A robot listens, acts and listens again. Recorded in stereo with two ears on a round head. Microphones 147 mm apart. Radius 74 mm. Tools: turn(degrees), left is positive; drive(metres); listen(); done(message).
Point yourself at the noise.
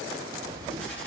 turn(degrees=30)
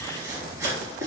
turn(degrees=-20)
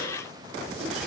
listen()
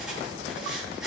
done("Facing the writing.")